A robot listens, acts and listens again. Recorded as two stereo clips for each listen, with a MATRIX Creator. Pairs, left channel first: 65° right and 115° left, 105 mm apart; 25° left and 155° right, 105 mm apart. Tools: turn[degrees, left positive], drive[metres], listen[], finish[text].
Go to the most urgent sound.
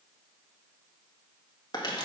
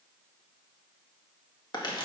Action: listen[]
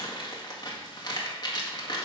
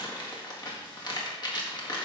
Action: listen[]
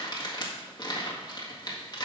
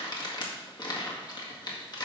Action: finish[I can't make out anything urgent, only crumpling.]